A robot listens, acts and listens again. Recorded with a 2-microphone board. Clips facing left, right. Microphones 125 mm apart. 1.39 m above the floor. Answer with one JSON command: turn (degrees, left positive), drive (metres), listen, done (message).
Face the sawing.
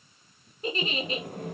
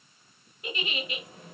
{"turn": 55}
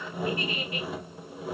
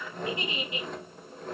{"turn": 10}
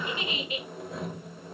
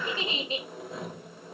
{"done": "Facing the sawing, 1 to 2 m away."}